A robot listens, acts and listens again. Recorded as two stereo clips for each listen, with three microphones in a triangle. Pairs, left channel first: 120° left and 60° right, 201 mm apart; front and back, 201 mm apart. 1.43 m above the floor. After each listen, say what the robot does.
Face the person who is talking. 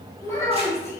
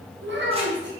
Turn 165° right.
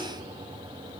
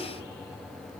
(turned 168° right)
Keep listening.
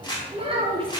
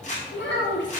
Facing the child speaking.